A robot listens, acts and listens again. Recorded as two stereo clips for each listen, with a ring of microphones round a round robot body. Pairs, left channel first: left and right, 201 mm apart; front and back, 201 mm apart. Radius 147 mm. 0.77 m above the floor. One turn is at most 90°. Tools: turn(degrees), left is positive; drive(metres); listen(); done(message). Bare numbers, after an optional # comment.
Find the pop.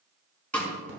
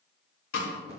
listen()
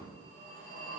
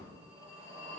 listen()
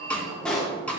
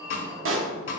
# The pop: 175° left.
turn(90)
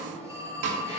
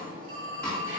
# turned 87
# Nothing new. It was at 90° left.
turn(90)
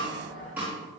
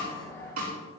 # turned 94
done("I heard a pop from this way, but can't make it out now.")